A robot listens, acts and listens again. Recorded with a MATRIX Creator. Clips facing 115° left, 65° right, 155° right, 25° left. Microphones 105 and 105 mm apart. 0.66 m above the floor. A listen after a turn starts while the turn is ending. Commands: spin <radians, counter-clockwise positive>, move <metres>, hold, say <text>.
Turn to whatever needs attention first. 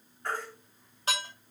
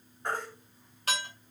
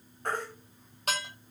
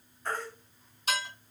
spin -2.36
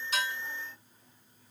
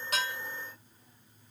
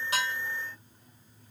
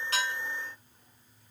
hold
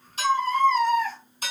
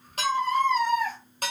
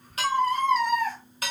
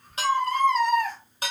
say Facing the baby crying.